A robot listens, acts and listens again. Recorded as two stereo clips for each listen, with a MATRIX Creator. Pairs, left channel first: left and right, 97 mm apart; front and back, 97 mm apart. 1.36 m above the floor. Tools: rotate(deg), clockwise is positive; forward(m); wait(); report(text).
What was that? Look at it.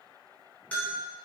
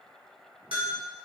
rotate(-165)
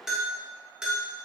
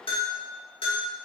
report("Facing the bell, 2 to 4 m away.")